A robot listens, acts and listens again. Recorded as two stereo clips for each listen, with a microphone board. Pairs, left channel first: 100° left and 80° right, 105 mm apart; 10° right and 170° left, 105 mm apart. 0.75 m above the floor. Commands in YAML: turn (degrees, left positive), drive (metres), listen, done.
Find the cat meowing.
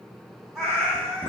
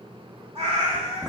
turn: -175
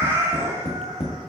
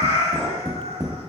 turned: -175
turn: -25
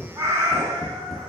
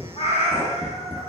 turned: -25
turn: -30
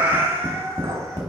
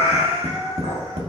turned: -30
turn: -10
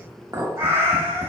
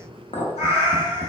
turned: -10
turn: -15
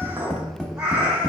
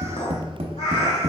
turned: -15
done: "Found it: a cat meowing, straight ahead, 1 to 2 m away."